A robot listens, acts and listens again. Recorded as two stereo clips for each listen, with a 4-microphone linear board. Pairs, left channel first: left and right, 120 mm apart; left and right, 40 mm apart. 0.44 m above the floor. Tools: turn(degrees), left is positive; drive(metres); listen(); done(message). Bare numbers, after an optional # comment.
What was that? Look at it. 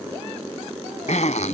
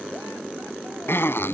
# The zipper: about 75° left or 105° left.
turn(75)
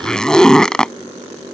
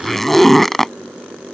done("Found it: a zipper, straight ahead.")